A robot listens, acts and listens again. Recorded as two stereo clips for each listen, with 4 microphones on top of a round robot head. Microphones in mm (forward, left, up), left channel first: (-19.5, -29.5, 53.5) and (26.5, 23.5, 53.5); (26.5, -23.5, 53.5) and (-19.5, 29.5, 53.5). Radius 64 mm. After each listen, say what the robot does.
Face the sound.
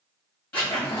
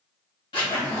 Turn 60° right.
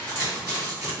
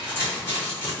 Found it: a zipper, straight ahead.